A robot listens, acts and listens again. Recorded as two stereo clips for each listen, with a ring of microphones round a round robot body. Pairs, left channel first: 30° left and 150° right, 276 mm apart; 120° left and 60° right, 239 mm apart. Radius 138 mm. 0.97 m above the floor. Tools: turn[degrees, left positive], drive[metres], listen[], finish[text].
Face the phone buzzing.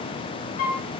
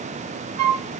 Action: listen[]
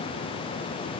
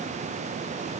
Action: listen[]
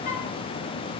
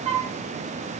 Action: finish[I can't make out a phone buzzing to turn to.]